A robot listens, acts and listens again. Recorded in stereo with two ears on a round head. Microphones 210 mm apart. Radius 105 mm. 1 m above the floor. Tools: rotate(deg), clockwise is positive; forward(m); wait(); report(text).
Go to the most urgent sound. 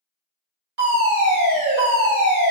rotate(45)
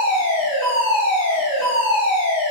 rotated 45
rotate(15)
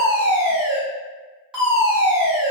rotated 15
forward(1.0)
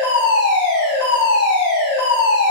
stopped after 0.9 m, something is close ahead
rotate(15)
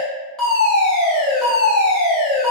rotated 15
report("I am next to the fire alarm.")